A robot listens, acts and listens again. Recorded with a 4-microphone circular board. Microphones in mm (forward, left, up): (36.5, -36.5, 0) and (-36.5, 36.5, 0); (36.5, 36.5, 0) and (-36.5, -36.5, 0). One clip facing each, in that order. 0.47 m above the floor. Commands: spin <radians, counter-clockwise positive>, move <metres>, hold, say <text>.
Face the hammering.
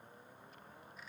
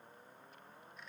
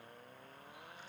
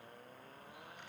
hold
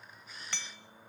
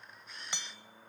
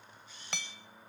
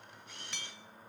spin 1.05
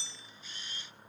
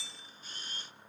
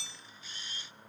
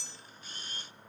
spin 0.26
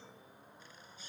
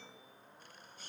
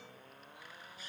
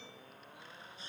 hold
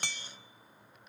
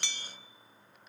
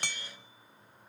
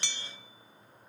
say Found it: hammering, straight ahead, under 1 m away.